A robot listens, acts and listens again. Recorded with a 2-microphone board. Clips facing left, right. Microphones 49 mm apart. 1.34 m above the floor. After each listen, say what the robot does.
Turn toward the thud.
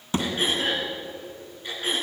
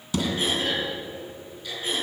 Turn 30° left.
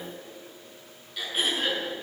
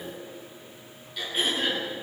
Keep listening.
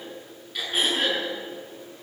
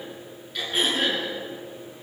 I heard a thud, but can't make it out now. It was about straight ahead or 120° left.